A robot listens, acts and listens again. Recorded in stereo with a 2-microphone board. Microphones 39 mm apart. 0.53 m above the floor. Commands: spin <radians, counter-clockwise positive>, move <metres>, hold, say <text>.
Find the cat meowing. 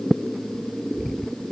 hold
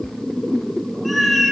spin 0.52
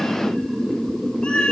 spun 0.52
spin 2.62
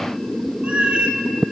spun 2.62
spin -0.61
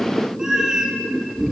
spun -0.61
spin -0.35
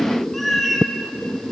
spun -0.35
say Found it: a cat meowing, straight ahead.